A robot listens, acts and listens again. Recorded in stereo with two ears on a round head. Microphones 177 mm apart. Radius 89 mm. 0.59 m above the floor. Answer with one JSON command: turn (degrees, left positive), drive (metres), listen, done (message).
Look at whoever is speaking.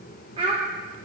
{"turn": -25}
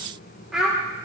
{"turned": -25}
{"done": "Facing the child speaking, 1 to 2 m away."}